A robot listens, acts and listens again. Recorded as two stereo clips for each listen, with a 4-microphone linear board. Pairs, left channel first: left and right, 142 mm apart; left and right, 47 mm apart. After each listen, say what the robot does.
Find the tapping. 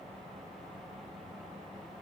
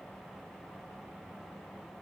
Keep listening.
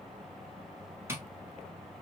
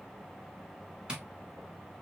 Turn 15° right.
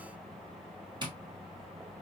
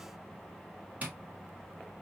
Turn 145° right.
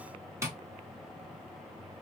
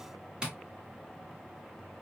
Turn 20° right.
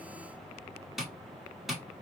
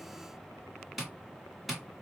Found it: tapping, straight ahead.